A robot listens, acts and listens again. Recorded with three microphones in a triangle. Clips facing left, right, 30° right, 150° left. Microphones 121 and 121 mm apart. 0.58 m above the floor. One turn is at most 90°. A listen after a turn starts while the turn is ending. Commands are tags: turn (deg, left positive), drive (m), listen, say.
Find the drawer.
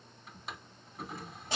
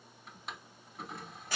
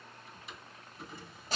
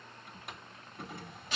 <turn deg="90"/>
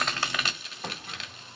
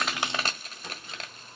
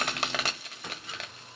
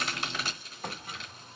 <turn deg="90"/>
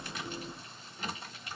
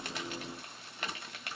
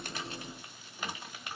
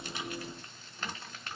<turn deg="45"/>
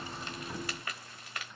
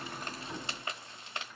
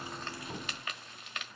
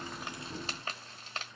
<listen/>
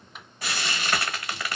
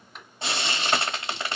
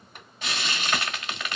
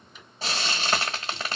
<say>Facing the drawer.</say>